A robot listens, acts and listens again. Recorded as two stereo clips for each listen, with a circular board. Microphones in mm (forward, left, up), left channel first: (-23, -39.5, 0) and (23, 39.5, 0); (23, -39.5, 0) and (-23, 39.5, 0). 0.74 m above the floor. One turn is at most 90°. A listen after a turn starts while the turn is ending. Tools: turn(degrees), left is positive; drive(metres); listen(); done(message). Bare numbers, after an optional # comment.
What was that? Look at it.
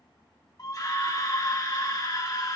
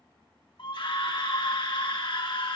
# The scream: 75° right.
turn(-75)
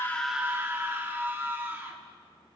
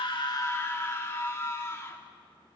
done("Found it: a scream, straight ahead, 1 to 2 m away.")